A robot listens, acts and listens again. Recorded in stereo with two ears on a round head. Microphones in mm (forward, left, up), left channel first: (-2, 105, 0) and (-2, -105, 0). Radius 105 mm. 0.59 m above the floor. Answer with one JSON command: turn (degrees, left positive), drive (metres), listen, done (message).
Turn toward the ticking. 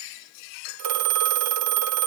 {"listen": true}
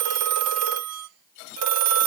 {"listen": true}
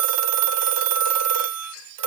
{"done": "I can't make out ticking to turn to."}